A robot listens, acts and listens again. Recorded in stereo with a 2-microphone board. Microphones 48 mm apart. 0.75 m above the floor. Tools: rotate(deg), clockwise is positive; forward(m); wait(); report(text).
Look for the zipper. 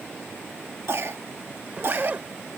rotate(35)
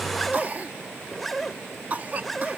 report("Facing the zipper.")